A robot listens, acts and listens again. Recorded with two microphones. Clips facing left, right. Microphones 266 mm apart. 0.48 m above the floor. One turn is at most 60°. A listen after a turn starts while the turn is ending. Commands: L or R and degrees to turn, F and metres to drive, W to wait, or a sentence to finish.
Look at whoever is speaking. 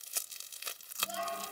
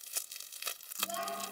R60
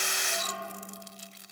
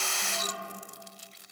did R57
R60
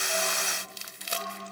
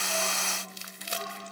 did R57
R25
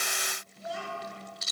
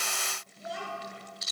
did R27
Facing the child speaking.